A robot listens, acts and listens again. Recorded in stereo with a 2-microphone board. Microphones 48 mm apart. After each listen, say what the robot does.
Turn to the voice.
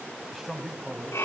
Turn 30° left.
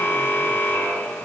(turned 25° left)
Keep listening.
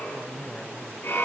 Turn 155° left.
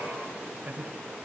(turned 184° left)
Turn 30° right.
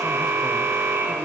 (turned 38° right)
Turn 10° left.
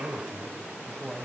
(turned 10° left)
Facing the man speaking.